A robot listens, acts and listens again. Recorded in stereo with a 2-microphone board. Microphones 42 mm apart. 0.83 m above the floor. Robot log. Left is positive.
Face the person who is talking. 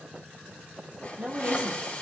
note: The woman speaking: about 30° right or 150° right.
cmd yaw -30
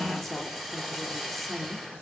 end: Found it: a woman speaking, straight ahead, 1 to 2 m away.